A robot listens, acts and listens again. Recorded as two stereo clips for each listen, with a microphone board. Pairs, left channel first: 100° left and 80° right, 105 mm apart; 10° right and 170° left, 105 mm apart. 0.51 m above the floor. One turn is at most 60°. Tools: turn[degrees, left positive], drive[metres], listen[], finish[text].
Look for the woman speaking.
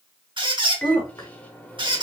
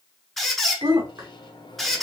Thought: The woman speaking: 125° left.
Action: turn[60]
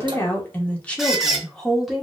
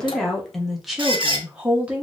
Thought: The woman speaking is now 160° right.
Action: turn[-60]
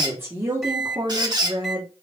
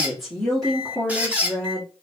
Thought: The woman speaking is now 85° right.
Action: turn[-60]
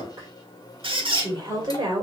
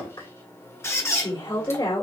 Thought: The woman speaking is now 40° right.
Action: turn[-40]
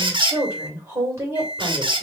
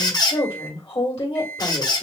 Thought: The woman speaking is now 20° right.
Action: turn[-20]
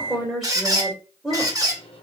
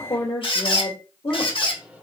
Action: finish[Found it: a woman speaking, straight ahead, 2 to 4 m away.]